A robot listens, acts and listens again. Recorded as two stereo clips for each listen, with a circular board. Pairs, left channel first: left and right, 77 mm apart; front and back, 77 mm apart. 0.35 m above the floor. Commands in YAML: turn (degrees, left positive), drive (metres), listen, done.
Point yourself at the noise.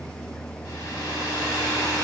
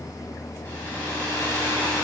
turn: 60
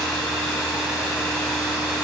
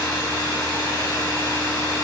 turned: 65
done: "Found it: a hair dryer, straight ahead."